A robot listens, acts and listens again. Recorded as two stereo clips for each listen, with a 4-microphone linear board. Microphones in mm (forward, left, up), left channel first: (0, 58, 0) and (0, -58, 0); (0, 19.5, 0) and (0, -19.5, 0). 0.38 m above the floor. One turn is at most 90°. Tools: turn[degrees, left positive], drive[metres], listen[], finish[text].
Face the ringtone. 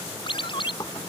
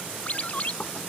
Thought: The ringtone: about 45° left or 135° left.
Action: turn[45]
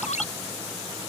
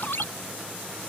Thought: So it is at 90° left.
Action: turn[90]
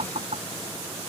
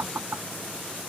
Action: listen[]
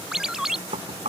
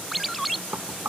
Action: finish[Facing the ringtone.]